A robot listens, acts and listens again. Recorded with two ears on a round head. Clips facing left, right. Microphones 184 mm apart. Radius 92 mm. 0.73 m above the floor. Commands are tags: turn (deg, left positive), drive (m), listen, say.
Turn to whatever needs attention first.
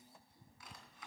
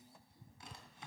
<listen/>
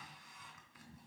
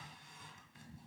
<listen/>
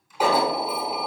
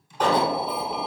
<turn deg="30"/>
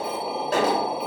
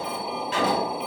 <turn deg="140"/>
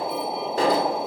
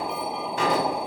<turn deg="35"/>
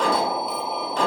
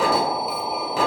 <say>Found it: an alarm, straight ahead.</say>